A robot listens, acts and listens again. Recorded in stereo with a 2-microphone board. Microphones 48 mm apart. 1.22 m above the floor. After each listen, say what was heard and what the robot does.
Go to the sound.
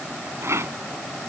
The rattle: about 70° right or 110° right. Turn 70° right.
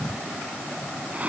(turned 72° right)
So it is at 35° right. Turn 35° right.
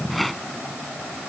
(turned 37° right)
Drive 1.0 m forward.
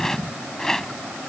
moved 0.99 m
The rattle is now 10° left. Turn 10° left.
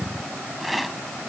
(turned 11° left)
Drive 1.0 m forward.
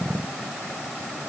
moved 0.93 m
Keep listening.
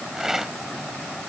The rattle is now 10° right. Turn 10° right.
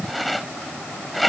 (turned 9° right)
Drive 1.0 m forward.
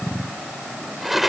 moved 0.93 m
Drive 1.0 m forward.
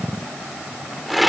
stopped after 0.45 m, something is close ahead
Arrived at the rattle, straight ahead.